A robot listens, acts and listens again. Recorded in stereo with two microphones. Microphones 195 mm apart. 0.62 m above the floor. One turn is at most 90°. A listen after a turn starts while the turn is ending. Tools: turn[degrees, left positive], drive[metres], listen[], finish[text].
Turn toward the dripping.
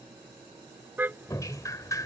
Thought: The dripping: about 20° left or 160° left.
Action: turn[20]
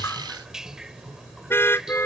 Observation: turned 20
Action: finish[Found it: dripping, straight ahead.]